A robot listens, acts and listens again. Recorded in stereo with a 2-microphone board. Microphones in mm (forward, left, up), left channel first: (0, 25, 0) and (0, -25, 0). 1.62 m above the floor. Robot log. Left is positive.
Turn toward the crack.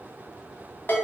cmd idle
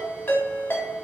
cmd idle
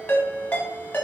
end: I can't make out a crack to turn to.